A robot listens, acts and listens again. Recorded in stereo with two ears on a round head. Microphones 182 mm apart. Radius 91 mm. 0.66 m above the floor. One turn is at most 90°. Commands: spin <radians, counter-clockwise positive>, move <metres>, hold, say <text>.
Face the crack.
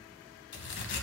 spin 1.05
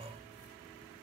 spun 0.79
hold
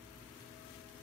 say I heard a crack, but can't make it out now. It was about 15° left or 75° left.